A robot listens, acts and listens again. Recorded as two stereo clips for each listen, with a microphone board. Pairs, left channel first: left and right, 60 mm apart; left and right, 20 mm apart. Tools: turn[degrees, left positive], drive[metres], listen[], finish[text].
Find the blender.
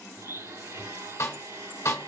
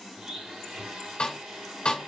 Thought: The blender: about 70° right or 110° right.
Action: turn[-70]
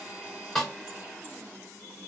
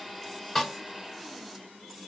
Thought: So it is at 35° right.
Action: turn[-35]
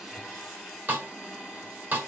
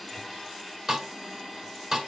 Action: finish[Found it: a blender, straight ahead, 2 to 4 m away.]